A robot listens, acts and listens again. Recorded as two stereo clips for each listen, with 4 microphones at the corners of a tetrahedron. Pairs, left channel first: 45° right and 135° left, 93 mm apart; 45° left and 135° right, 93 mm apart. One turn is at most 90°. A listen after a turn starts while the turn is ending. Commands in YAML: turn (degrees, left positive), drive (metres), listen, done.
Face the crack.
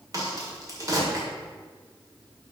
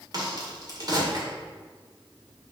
turn: -90
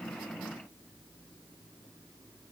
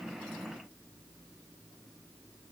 turn: -85
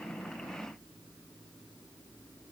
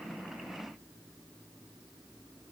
done: "I heard a crack from this way, but can't make it out now."